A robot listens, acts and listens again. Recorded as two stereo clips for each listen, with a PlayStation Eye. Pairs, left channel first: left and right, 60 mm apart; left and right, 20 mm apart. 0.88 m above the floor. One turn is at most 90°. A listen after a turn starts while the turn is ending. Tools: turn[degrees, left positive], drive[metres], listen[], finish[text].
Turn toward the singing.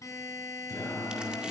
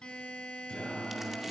Action: turn[90]
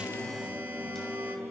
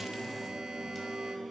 Action: finish[Found it: singing, straight ahead.]